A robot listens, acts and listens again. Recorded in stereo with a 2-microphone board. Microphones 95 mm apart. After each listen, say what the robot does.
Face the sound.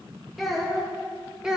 Turn 30° right.
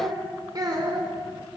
Turn 135° right.
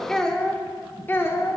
Turn 30° left.
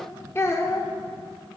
Turn 35° left.
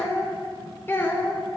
Turn 25° left.
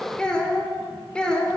Turn 10° left.
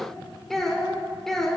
Found it: a child speaking, straight ahead, 1 to 2 m away.